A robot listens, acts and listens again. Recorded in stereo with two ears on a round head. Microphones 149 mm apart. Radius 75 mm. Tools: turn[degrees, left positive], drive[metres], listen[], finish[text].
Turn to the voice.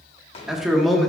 Action: turn[30]
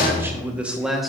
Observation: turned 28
Action: turn[30]
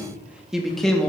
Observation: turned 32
Action: turn[30]
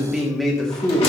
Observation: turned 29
Action: turn[30]
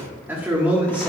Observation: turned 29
Action: turn[-30]
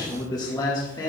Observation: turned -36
Thought: So it is at 25° left.
Action: turn[25]
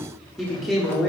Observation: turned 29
Action: finish[Facing the man speaking.]